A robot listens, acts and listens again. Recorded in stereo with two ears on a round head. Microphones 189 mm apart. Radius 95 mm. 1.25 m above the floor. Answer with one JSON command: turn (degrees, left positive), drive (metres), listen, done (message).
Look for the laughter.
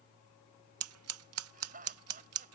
{"turn": -45}
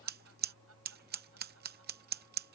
{"listen": true}
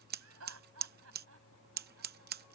{"turn": -100}
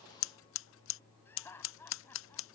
{"turn": 10}
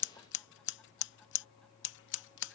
{"listen": true}
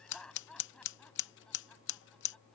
{"done": "Facing the laughter."}